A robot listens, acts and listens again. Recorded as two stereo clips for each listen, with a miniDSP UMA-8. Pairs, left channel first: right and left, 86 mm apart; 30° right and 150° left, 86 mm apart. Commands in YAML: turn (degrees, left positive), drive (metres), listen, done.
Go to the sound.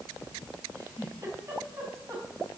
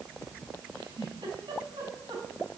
turn: 145
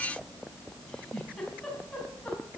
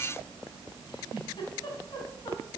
turn: -10
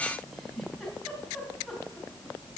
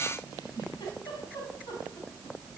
drive: 1.0
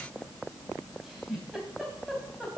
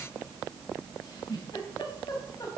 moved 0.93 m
drive: 1.0
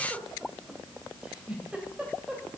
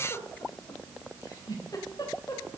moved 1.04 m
turn: 10
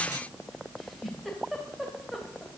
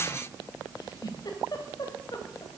drive: 1.0
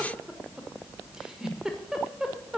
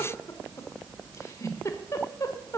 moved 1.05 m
turn: 10
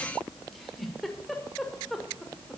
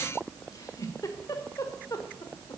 drive: 1.0
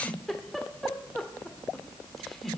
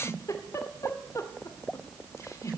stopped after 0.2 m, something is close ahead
done: "Arrived at the giggle, straight ahead."